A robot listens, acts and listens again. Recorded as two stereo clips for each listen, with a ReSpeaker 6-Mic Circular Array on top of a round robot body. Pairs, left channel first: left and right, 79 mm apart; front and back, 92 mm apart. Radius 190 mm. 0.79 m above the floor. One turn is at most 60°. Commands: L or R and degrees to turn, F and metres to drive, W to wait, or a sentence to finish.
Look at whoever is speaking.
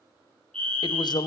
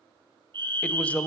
L60
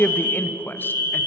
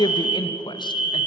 L25
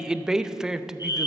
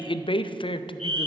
R10
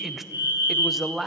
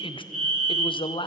Facing the man speaking, under 1 m away.